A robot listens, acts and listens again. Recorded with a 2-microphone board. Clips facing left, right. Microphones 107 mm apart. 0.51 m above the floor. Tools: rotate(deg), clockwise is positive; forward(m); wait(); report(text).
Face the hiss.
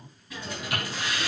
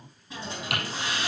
rotate(30)
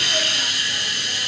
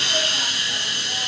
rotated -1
rotate(30)
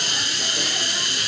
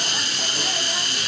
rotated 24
rotate(125)
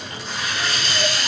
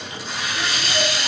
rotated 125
report("Found it: a hiss, straight ahead, 2 to 4 m away.")